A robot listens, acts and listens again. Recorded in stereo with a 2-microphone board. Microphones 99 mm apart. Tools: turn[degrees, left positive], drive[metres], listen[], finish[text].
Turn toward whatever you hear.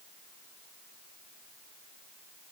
Action: listen[]
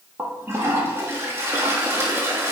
Thought: The toilet flushing: about 25° right or 155° right.
Action: turn[-25]
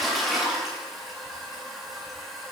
Action: finish[Facing the toilet flushing, 1 to 2 m away.]